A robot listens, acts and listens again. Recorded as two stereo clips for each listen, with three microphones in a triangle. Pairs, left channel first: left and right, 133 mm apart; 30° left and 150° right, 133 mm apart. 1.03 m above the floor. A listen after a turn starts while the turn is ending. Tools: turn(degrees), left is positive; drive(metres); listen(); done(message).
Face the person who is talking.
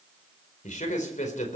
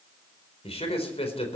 turn(degrees=70)
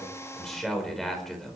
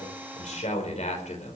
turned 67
done("Found it: a man speaking, straight ahead.")